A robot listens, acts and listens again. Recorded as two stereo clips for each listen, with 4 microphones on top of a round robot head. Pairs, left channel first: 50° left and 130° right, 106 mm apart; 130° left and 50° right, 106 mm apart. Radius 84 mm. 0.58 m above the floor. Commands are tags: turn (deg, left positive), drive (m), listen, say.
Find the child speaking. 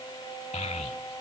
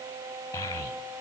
<turn deg="70"/>
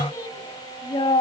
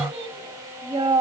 <say>Found it: a child speaking, straight ahead, 2 to 4 m away.</say>